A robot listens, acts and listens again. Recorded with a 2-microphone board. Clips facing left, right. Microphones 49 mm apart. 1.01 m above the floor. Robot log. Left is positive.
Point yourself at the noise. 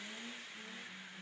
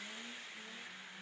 cmd idle
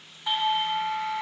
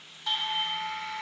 note: The doorbell: about 15° left or 165° left.
cmd yaw +15
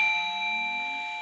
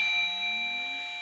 note: So it is at 150° left.
cmd yaw +150
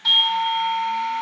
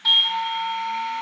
end: Found it: a doorbell, straight ahead.